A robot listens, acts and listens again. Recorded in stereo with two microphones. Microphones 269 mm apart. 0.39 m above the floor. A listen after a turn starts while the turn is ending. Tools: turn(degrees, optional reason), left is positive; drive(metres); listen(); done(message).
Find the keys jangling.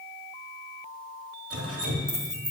turn(degrees=30)
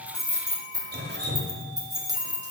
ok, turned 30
turn(degrees=-15, reason="So it is at 15° right.")
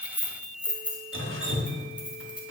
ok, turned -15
done("Found it: keys jangling, straight ahead, 1 to 2 m away.")